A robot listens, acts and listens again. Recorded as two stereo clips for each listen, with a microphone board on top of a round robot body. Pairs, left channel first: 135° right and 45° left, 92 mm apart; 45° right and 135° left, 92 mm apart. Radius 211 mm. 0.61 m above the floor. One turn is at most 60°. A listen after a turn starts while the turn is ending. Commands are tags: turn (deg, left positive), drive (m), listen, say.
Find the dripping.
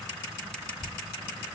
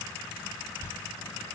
<turn deg="-60"/>
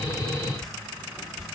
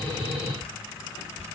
<turn deg="-45"/>
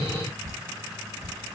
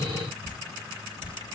<turn deg="-10"/>
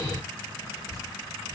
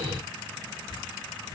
<say>Facing the dripping, 1 to 2 m away.</say>